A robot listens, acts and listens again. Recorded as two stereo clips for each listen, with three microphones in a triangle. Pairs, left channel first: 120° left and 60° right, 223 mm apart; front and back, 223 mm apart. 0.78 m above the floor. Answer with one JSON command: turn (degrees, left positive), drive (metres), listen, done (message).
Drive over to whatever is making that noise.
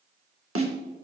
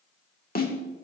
{"turn": -50}
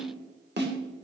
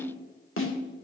{"turn": -20}
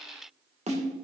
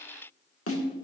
{"drive": 1.0}
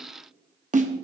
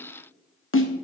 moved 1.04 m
{"drive": 1.0}
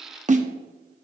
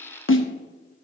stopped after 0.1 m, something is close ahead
{"done": "I am next to the snare drum."}